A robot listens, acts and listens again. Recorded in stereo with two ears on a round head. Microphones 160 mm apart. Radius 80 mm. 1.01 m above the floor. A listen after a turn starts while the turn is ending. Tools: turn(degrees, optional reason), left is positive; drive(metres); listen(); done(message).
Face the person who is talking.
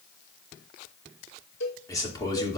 turn(degrees=25, reason="The man speaking: about 25° left or 155° left.")
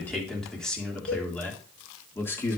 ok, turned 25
turn(degrees=30)
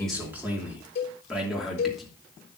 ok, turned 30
done("Found it: a man speaking, straight ahead, 2 to 4 m away.")